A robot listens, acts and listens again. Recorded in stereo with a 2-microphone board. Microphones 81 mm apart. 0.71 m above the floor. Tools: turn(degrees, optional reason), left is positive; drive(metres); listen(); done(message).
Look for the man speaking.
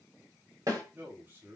turn(degrees=-30, reason="The man speaking: about 30° right or 150° right.")
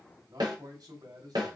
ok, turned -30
turn(degrees=-110, reason="So it is at 110° right.")
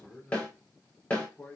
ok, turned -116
turn(degrees=15, reason="The man speaking is now 15° left.")
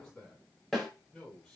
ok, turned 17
done("Found it: a man speaking, straight ahead, over 4 m away.")